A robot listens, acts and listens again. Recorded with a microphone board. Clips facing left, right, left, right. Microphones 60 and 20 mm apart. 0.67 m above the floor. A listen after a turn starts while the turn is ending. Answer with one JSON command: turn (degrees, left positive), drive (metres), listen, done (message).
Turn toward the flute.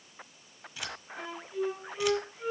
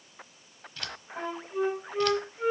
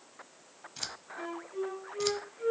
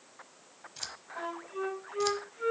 {"turn": -65}
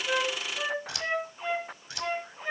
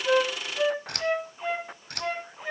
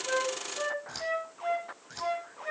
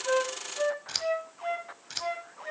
{"done": "Facing the flute, over 4 m away."}